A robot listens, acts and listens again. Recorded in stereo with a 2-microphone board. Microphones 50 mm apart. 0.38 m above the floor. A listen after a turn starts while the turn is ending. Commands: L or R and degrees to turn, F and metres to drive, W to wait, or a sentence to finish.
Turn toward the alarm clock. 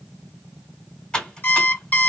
L40
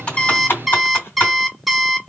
Found it: an alarm clock, straight ahead, 1 to 2 m away.